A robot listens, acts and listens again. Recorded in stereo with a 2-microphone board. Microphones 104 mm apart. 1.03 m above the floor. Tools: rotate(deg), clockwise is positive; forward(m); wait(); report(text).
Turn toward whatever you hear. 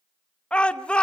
rotate(-30)
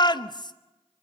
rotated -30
rotate(-135)
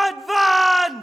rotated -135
report("Facing the shout.")